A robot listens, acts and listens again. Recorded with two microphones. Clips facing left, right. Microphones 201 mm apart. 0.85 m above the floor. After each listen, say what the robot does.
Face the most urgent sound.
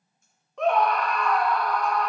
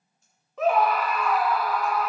Turn 30° right.
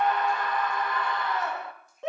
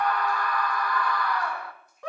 Turn 25° left.
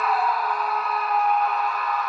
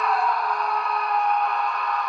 Facing the scream.